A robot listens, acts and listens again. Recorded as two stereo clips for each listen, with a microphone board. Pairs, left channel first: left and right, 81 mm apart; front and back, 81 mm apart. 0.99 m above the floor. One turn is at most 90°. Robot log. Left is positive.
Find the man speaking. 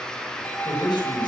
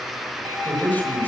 note: The man speaking: 65° left.
cmd yaw +65
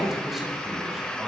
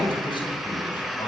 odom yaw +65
end: Found it: a man speaking, straight ahead, over 4 m away.